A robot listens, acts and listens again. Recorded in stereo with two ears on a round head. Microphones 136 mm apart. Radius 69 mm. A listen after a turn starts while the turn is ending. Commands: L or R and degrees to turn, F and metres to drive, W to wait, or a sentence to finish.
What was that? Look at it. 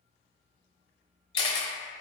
L30
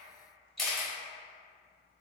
Found it: a camera shutter, straight ahead, under 1 m away.